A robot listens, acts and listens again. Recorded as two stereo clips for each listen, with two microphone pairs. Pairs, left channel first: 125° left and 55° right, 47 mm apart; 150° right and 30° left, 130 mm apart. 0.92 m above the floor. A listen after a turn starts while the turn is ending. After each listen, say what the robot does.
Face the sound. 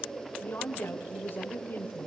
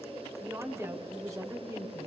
Turn 90° left.
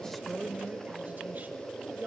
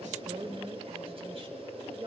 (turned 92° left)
Turn 15° right.
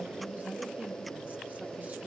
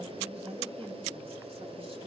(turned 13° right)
Found it: a woman speaking, straight ahead, over 4 m away.